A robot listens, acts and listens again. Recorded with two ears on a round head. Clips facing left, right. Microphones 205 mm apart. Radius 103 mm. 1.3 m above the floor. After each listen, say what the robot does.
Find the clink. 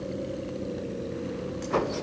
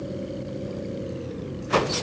Keep listening.
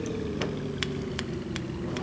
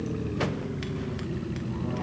Keep listening.
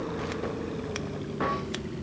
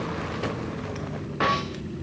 I can't make out a clink.